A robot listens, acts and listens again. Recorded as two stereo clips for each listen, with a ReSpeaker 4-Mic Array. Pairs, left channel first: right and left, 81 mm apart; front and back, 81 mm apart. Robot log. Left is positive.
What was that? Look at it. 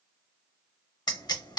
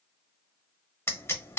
note: The pop: 60° right.
cmd yaw -60
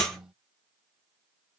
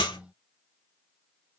end: Facing the pop, under 1 m away.